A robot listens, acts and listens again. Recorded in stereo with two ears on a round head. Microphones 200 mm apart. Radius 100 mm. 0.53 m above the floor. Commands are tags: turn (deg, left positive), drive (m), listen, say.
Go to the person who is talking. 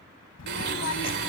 <turn deg="90"/>
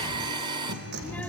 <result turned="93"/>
<drive m="1.0"/>
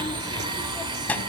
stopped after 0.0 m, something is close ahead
<say>Something is in my way. I am facing the child speaking but have not reached it.</say>